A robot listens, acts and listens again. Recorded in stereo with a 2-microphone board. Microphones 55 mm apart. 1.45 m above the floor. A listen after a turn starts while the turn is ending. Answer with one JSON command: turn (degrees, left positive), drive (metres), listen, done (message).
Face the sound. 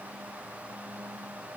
{"listen": true}
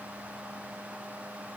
{"listen": true}
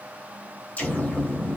{"turn": 25}
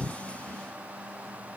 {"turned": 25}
{"listen": true}
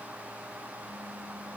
{"done": "I heard an explosion, but can't make it out now. It was about straight ahead or 130° left."}